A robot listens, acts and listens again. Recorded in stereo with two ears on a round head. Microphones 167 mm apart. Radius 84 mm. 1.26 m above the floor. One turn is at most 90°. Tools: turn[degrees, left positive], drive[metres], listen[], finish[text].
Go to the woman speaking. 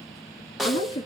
Thought: The woman speaking: about 30° left or 150° left.
Action: turn[30]
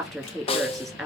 Action: drive[1.0]
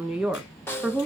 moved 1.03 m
Action: drive[1.0]
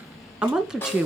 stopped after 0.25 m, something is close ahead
Action: finish[Arrived at the woman speaking, straight ahead.]